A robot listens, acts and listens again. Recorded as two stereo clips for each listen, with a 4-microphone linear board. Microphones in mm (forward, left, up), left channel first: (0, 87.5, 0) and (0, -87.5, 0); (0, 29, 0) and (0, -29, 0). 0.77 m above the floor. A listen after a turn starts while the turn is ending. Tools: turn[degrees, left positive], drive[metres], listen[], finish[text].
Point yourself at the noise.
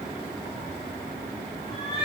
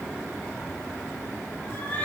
Thought: The cat meowing: about 30° left or 150° left.
Action: turn[30]
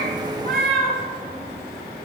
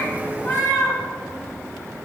Thought: So it is at 120° left.
Action: turn[120]
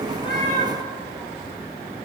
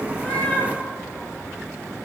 Thought: The cat meowing is now 15° left.
Action: turn[15]
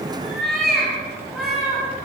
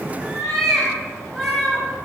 Action: finish[Found it: a cat meowing, straight ahead, over 4 m away.]